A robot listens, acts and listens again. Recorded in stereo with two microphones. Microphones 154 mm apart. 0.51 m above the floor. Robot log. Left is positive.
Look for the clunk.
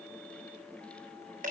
cmd idle
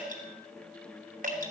cmd idle
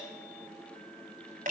end: I can't make out a clunk to turn to.